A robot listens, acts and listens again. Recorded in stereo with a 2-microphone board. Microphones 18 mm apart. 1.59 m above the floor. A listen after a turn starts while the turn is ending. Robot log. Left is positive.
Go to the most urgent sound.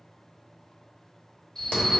note: The alarm: about 45° left or 135° left.
cmd yaw +45
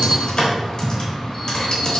cmd idle
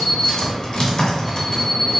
cmd fwd 1.0
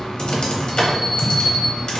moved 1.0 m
cmd fwd 1.0
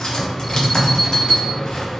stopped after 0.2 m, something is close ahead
end: Arrived at the alarm, straight ahead.